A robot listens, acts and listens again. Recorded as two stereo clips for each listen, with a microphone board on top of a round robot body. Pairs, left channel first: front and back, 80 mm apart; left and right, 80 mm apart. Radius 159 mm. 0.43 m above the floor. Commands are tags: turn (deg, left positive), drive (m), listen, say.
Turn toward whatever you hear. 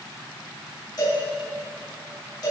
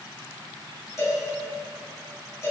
<turn deg="35"/>
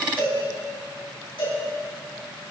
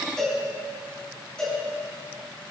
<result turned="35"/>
<turn deg="10"/>
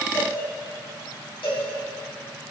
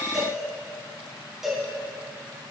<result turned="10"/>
<say>Found it: a cowbell, straight ahead, over 4 m away.</say>